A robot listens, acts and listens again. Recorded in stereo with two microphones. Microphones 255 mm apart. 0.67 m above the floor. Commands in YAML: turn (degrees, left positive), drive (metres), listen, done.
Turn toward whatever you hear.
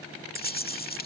turn: 35
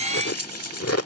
turn: 105
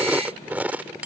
done: "Found it: chewing, straight ahead."